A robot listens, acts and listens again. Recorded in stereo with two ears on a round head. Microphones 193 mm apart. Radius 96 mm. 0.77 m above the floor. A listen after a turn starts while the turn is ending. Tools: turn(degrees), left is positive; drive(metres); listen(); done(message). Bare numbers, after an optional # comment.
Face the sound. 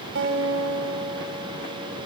# The guitar: about 60° right or 120° right.
turn(-60)
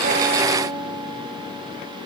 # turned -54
# So it is at 10° right.
turn(-10)
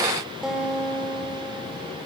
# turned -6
done("Facing the guitar.")